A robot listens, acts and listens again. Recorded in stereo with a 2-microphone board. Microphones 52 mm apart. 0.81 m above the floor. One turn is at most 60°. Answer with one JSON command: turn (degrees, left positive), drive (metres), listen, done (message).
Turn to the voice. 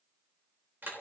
{"listen": true}
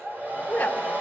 {"turn": 25}
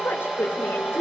{"turn": 60}
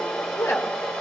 {"turn": 60}
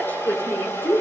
{"turn": 45}
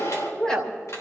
{"turn": 15}
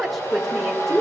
{"done": "Found it: a woman speaking, straight ahead."}